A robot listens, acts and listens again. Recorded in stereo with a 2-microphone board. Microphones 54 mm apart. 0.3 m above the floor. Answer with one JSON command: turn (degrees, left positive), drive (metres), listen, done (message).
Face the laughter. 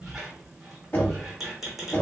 {"listen": true}
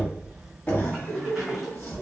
{"turn": 60}
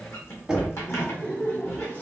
{"turn": 40}
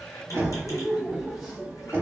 {"done": "Facing the laughter, 1 to 2 m away."}